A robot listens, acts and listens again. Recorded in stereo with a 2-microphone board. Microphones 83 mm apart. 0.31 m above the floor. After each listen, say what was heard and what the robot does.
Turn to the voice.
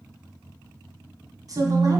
The woman speaking: about 45° right or 135° right. Turn 45° right.
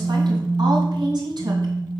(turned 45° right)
So it is at 120° right. Turn 120° right.
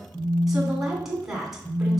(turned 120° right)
Facing the woman speaking, 2 to 4 m away.